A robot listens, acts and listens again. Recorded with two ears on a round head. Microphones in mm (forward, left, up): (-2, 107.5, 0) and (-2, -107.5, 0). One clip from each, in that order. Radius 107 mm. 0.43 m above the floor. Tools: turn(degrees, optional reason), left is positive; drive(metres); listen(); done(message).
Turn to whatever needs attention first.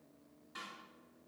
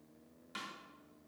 listen()
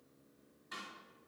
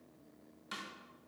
listen()
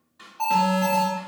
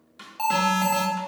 turn(degrees=-55, reason="The alarm: about 55° right or 125° right.")
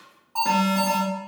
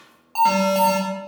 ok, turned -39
turn(degrees=-80, reason="So it is at 80° right.")
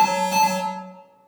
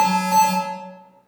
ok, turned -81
done("Found it: an alarm, straight ahead.")